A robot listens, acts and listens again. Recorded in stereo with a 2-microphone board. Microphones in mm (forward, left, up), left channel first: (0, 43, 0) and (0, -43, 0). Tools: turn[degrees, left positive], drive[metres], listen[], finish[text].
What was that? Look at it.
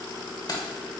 Thought: The keys jangling: about 50° left or 130° left.
Action: turn[50]
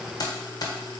Thought: So it is at 45° left.
Action: turn[45]
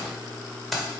Action: finish[Facing the keys jangling.]